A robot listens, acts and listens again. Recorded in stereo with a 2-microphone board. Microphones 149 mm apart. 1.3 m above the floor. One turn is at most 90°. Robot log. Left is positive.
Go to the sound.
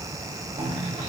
note: The cough: about 45° right or 135° right.
cmd yaw -45
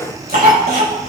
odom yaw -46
note: So it is at 85° right.
cmd yaw -85
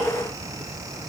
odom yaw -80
cmd idle
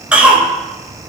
note: The cough is now 10° right.
cmd yaw -10
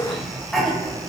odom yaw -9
cmd fwd 1.0
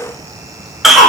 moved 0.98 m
cmd fwd 1.0
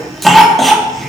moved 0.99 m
cmd fwd 1.0
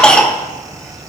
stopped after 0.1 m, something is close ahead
end: I am next to the cough.